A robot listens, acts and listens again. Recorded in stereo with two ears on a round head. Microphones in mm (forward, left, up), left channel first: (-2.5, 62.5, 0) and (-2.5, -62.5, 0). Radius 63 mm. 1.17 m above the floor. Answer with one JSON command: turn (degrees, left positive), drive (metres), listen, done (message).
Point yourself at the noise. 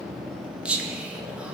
{"turn": -30}
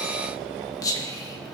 {"turn": 25}
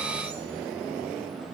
{"listen": true}
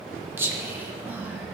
{"turn": -15}
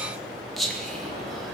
{"done": "Found it: whispering, straight ahead."}